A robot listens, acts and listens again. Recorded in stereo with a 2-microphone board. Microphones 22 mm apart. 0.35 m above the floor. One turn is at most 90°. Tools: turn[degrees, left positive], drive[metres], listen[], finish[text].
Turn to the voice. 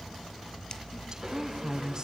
Thought: The woman speaking: about 30° right or 150° right.
Action: turn[-30]
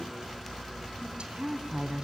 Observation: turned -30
Thought: So it is at 115° right.
Action: turn[-90]
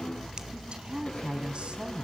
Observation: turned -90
Thought: The woman speaking is now 65° right.
Action: turn[-65]
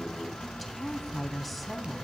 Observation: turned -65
Action: finish[Found it: a woman speaking, straight ahead.]